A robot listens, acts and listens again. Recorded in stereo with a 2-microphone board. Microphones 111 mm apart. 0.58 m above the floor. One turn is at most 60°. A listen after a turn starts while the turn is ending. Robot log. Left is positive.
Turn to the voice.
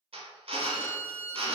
cmd idle
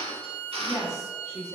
note: The woman speaking: about 30° right or 150° right.
cmd yaw -30
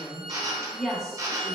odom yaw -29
end: Found it: a woman speaking, straight ahead.